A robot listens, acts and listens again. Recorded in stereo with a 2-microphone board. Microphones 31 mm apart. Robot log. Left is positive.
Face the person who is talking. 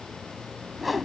cmd idle
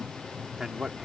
note: The man speaking: about 15° right or 165° right.
cmd yaw -15
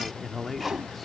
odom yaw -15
end: Facing the man speaking.